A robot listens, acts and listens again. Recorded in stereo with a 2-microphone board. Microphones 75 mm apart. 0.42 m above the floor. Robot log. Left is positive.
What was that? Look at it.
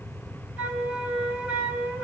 note: The flute: about 20° right or 160° right.
cmd yaw -20
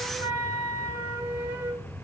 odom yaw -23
note: So it is at 135° right.
cmd yaw -135
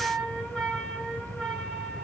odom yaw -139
end: Found it: a flute, straight ahead.